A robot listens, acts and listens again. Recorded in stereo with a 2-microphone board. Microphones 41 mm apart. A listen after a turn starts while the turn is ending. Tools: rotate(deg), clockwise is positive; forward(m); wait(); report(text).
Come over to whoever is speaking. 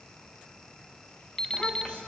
rotate(-25)
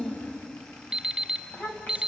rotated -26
rotate(-125)
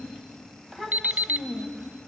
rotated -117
forward(1.0)
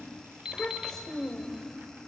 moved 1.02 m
rotate(-15)
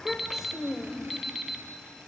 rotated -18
forward(1.0)
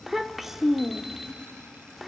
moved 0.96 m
forward(1.0)
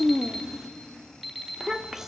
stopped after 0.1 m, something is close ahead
rotate(10)
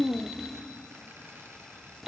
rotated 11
report("I am next to the child speaking.")